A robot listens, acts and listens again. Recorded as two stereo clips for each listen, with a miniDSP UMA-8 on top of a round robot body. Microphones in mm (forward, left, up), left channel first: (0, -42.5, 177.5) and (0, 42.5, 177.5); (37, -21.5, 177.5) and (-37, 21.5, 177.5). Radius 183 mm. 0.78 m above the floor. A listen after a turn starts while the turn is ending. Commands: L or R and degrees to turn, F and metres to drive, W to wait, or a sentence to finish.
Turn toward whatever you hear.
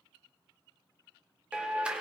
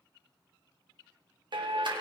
L170
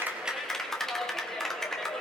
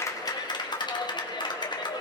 Found it: a clap, straight ahead.